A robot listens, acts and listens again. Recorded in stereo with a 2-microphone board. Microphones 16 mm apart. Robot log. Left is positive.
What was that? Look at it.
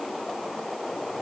cmd idle
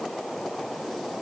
cmd idle
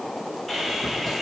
cmd yaw -30
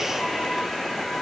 note: So it is at 25° left.
cmd yaw +25
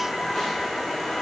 note: The sawing is now 10° left.
cmd yaw +10
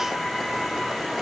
end: Found it: sawing, straight ahead.